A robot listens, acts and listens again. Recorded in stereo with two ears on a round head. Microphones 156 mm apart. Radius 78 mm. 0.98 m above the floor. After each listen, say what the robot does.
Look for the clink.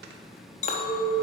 Turn 40° left.
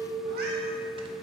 Facing the clink, under 1 m away.